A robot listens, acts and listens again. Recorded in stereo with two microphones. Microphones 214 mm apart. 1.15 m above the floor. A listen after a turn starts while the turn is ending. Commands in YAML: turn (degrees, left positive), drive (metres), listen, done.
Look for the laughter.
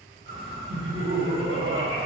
turn: -70
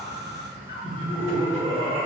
turn: -25
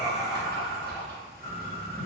listen: true
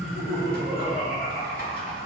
done: "Facing the laughter, 1 to 2 m away."